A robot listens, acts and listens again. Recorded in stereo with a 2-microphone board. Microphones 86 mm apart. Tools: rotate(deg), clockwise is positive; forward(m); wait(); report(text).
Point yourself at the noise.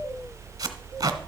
rotate(45)
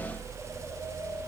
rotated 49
wait()
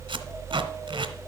rotate(85)
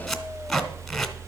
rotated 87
report("Found it: tape being pulled, straight ahead, 1 to 2 m away.")